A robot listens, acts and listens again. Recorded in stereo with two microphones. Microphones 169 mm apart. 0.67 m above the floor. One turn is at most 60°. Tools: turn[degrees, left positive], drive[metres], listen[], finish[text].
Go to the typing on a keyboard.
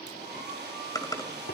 Thought: The typing on a keyboard: about 20° left or 160° left.
Action: turn[20]
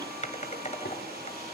Thought: So it is at 135° left.
Action: turn[60]
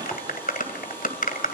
Thought: The typing on a keyboard is now 60° left.
Action: turn[60]
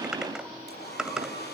Action: drive[1.0]
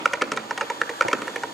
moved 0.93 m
Action: drive[1.0]
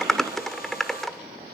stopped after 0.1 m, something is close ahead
Action: finish[Arrived at the typing on a keyboard, straight ahead.]